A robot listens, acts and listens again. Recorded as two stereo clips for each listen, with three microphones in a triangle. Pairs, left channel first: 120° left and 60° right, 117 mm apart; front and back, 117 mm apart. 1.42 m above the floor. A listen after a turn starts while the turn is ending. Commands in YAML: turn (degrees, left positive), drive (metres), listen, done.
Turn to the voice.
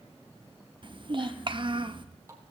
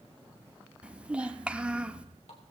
turn: -100
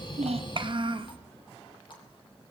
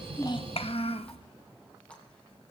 turn: -20
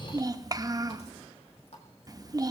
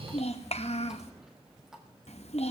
done: "Found it: a child speaking, straight ahead, 1 to 2 m away."